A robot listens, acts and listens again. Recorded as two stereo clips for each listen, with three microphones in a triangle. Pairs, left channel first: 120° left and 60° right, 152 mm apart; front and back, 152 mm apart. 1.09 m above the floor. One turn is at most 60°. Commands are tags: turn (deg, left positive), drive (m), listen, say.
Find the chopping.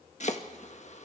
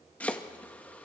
<turn deg="60"/>
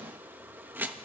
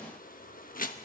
<turn deg="20"/>
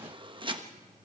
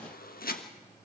<say>Found it: chopping, straight ahead.</say>